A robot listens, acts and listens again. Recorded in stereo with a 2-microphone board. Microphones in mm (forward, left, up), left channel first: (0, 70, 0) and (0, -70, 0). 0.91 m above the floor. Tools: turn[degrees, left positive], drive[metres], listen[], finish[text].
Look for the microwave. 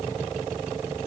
Action: listen[]
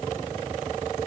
Action: listen[]
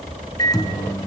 Thought: The microwave: about 25° left or 155° left.
Action: turn[25]
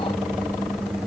Action: finish[Facing the microwave.]